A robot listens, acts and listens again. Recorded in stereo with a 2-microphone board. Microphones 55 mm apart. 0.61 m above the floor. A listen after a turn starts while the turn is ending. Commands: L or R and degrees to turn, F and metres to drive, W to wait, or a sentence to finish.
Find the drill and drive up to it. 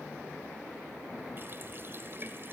W
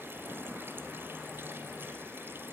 W
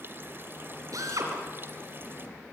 R90
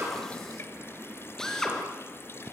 L10
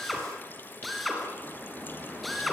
F1.0
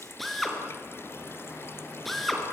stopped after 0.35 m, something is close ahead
Blocked. The drill is further on, straight ahead.